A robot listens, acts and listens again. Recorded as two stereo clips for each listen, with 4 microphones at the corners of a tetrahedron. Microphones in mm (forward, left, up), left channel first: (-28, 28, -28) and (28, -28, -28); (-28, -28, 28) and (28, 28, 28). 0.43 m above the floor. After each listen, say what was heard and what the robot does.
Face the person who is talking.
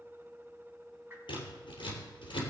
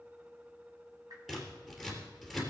Keep listening.
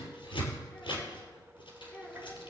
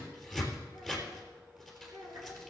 The child speaking: 65° left. Turn 65° left.
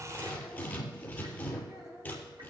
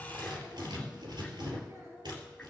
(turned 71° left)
Found it: a child speaking, straight ahead.